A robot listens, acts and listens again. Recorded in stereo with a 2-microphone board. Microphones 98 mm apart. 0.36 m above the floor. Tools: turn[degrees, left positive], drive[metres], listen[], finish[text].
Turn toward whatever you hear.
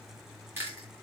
Thought: The chewing: about 25° right or 155° right.
Action: turn[-25]
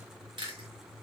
Thought: So it is at 130° right.
Action: turn[-130]
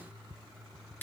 Thought: The chewing is now 20° left.
Action: turn[20]
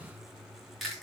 Action: finish[Facing the chewing.]